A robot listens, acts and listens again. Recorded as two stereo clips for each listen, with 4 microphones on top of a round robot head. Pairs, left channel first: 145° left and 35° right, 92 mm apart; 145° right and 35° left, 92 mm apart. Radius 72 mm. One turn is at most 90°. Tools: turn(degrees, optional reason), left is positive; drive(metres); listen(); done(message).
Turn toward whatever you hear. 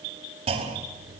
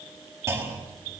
turn(degrees=-25, reason="The clunk: 25° right.")
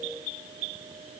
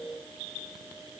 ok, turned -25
done("Facing where the clunk came from. I can't hear it now.")